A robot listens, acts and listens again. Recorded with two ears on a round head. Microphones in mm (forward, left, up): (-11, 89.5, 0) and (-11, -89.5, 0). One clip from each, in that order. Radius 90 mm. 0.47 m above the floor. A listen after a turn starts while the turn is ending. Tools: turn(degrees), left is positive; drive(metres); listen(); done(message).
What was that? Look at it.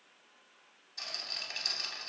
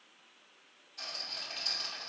turn(degrees=50)
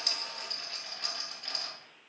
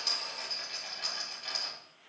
done("Facing the rattle.")